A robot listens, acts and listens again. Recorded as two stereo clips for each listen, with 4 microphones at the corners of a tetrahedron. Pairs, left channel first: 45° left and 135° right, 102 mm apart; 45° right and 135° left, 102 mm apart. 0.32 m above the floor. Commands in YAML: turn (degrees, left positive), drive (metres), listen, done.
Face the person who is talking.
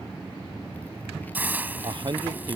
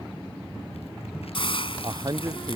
turn: -175
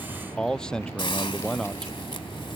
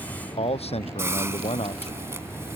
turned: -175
turn: -40
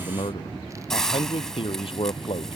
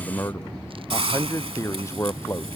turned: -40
turn: 20
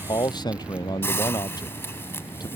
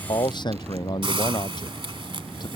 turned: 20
done: "Found it: a man speaking, straight ahead."